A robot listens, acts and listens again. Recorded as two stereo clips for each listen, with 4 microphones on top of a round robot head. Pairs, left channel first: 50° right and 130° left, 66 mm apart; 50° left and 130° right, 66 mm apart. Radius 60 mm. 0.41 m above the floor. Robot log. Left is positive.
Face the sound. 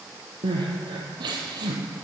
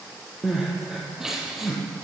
note: The crying: 145° left.
cmd yaw +145
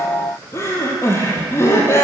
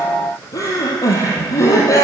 end: Facing the crying.